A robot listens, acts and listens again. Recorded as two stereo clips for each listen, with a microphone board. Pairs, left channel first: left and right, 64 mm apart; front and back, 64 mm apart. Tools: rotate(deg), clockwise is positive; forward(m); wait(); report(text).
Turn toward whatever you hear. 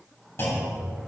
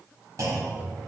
rotate(-140)
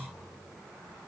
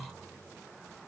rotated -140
report("Facing where the clunk came from. I can't hear it now.")